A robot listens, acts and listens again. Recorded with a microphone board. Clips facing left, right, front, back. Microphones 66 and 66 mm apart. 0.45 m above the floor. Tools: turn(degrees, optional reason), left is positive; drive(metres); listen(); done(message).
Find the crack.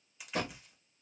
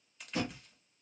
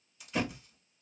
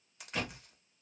turn(degrees=170, reason="The crack: 170° left.")
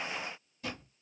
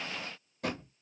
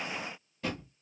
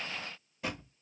done("Facing where the crack came from. I can't hear it now.")